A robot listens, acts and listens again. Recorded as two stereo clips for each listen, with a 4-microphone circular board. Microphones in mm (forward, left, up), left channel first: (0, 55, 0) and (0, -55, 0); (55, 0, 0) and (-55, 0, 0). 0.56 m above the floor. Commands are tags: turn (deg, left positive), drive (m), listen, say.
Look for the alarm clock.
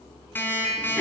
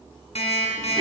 <turn deg="20"/>
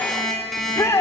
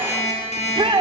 <say>Facing the alarm clock, 2 to 4 m away.</say>